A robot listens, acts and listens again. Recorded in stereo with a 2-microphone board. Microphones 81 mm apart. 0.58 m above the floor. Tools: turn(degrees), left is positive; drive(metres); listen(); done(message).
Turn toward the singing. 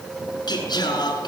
turn(degrees=65)
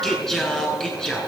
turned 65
turn(degrees=10)
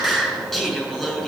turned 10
done("Facing the singing, over 4 m away.")